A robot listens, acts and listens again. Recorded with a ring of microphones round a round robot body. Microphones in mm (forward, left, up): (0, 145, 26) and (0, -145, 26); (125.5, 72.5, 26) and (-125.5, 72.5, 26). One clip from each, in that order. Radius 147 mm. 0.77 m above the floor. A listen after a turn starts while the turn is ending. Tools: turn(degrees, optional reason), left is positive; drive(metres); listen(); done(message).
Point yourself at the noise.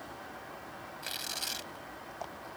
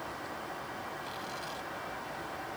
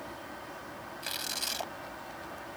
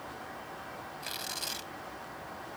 turn(degrees=75, reason="The tearing paper: 75° left.")
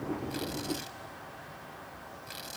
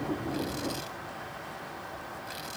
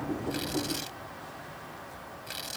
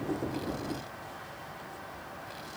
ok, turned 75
listen()
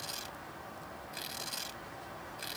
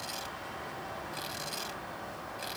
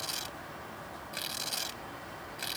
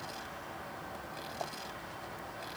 turn(degrees=10, reason="The tearing paper is now 10° left.")
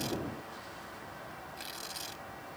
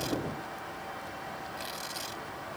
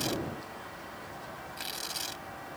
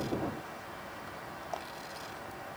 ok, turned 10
done("Found it: tearing paper, straight ahead.")